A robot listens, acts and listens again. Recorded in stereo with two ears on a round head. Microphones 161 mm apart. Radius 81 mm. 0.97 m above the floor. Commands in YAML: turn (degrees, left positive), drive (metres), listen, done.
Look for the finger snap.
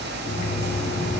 listen: true
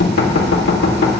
listen: true
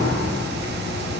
done: "I can't make out a finger snap, only knocking."